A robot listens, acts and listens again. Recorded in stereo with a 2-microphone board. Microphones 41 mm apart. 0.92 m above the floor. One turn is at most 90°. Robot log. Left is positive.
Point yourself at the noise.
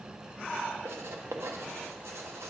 cmd yaw -90
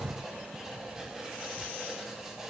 note: So it is at 10° right.
cmd yaw -10
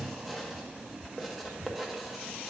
end: Facing the writing, under 1 m away.